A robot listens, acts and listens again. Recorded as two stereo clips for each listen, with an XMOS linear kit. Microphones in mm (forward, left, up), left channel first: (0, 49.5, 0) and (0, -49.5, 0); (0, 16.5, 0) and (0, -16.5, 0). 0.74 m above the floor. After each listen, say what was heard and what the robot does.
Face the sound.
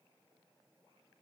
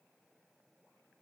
Keep listening.
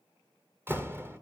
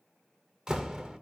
The door slam: about 20° right or 160° right. Turn 20° right.
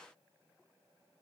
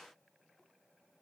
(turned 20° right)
Keep listening.
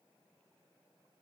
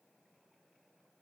I heard a door slam, but can't make it out now. It was about straight ahead or 140° right.